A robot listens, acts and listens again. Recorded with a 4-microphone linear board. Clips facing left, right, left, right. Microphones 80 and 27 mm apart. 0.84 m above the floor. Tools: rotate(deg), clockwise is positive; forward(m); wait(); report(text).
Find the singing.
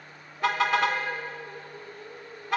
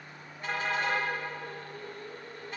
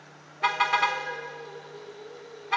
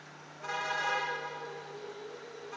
rotate(-30)
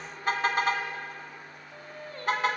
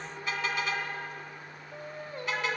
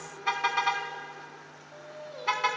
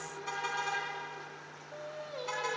rotate(15)
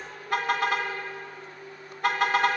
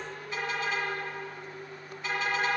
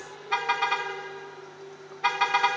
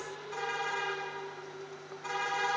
report("Found it: singing, straight ahead.")